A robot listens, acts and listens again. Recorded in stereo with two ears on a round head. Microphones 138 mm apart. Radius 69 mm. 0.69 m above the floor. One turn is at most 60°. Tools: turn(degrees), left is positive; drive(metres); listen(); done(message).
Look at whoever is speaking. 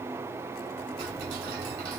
listen()
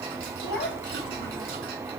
turn(degrees=60)
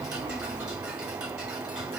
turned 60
turn(degrees=30)
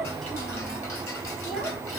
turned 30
done("Found it: a child speaking, straight ahead.")